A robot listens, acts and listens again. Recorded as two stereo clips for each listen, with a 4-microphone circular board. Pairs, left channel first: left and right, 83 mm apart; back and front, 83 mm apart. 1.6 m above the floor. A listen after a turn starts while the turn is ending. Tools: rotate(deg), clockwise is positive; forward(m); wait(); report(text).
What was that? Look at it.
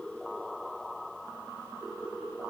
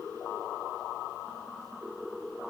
wait()
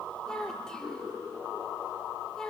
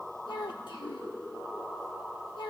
rotate(-170)
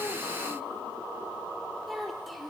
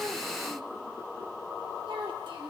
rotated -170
report("Facing the child speaking.")